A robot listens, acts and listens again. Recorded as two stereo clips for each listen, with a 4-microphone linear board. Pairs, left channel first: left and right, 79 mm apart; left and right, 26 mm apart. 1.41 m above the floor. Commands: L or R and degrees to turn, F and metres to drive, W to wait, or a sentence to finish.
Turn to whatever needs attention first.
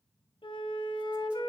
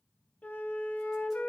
W
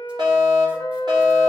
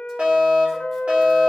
R70
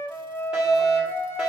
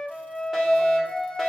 R10
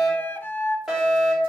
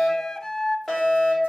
Facing the fire alarm.